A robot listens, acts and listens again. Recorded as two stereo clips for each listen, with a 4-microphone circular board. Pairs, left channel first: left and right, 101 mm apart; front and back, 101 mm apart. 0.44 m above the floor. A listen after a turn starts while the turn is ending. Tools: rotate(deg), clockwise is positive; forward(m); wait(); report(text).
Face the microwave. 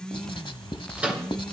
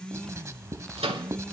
rotate(165)
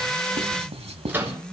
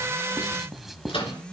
rotate(20)
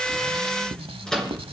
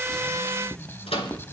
report("Facing the microwave.")